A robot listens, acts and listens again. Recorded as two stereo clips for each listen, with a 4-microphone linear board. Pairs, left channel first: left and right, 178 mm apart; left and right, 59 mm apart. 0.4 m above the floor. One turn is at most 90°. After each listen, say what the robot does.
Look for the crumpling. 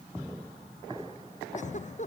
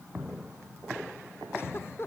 Keep listening.
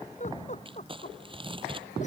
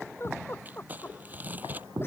Turn 30° right.
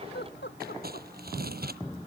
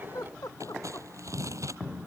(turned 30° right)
Turn 90° right.
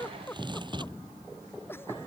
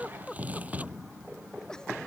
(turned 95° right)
Turn 25° right.
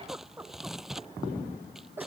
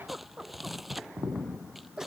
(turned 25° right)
Facing the crumpling.